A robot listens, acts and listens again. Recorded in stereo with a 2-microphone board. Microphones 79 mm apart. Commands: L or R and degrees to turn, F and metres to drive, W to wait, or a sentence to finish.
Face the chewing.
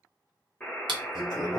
R70
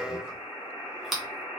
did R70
Facing the chewing.